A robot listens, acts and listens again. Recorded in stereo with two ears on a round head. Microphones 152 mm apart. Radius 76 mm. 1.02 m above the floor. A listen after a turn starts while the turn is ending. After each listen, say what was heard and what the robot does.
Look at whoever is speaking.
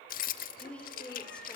Turn 30° left.
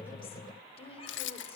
So it is at 145° left. Turn 145° left.
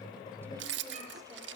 Keep listening.
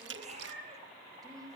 The woman speaking is now 20° right. Turn 20° right.
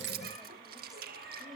Facing the woman speaking, over 4 m away.